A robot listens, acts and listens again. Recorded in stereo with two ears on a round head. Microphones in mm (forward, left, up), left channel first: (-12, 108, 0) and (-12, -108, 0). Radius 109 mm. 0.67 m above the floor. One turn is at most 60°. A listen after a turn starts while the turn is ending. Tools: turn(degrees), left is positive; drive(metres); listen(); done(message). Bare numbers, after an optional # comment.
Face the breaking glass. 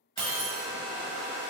# The breaking glass: about 40° right or 140° right.
turn(-40)
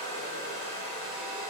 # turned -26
listen()
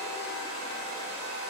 done("I heard breaking glass, but can't make it out now. It was about 10° right or 115° right.")